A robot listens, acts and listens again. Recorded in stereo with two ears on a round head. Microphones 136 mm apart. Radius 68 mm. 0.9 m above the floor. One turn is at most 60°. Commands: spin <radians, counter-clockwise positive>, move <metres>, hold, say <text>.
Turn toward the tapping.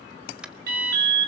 spin -0.52
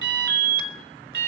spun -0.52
hold
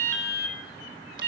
hold
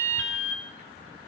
say I heard tapping, but can't make it out now. It was about 25° left or 145° right.